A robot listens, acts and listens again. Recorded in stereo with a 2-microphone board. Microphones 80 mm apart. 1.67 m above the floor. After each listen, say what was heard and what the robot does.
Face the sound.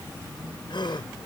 Turn 90° left.
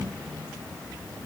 I heard a gasp from this way, but can't make it out now.